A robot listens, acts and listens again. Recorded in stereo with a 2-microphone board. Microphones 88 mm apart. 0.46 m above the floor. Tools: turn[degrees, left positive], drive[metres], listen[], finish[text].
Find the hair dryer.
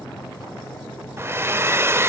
Thought: The hair dryer: about 25° right or 155° right.
Action: turn[-25]
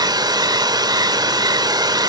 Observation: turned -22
Thought: So it is at 125° right.
Action: turn[-125]
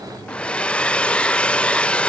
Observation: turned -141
Thought: The hair dryer is now 15° left.
Action: turn[15]
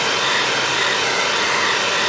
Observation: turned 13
Action: finish[Facing the hair dryer, under 1 m away.]